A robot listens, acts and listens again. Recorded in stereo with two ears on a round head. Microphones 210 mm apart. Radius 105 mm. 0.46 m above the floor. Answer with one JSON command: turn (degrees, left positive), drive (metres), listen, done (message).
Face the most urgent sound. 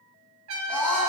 {"turn": 30}
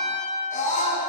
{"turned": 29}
{"turn": 145}
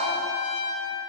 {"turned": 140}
{"listen": true}
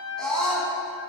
{"done": "Found it: a scream, straight ahead."}